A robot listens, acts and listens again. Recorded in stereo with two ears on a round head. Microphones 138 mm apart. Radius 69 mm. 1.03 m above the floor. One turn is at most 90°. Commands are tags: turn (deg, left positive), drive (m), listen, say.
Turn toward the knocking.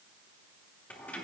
<listen/>
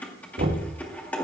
<turn deg="-70"/>
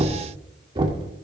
<turn deg="-35"/>
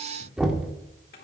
<say>Found it: knocking, straight ahead, 1 to 2 m away.</say>